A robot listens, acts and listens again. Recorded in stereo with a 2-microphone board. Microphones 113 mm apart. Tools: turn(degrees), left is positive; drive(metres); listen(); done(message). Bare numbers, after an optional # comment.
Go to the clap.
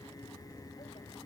listen()
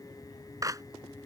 # The clap: about 30° right or 150° right.
turn(-30)
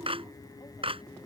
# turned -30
# So it is at 120° right.
turn(-120)
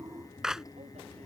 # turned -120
drive(1.0)
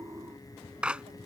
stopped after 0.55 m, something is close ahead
# The clap is now 10° right.
turn(-10)
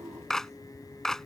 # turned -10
done("Blocked. The clap is further on, straight ahead.")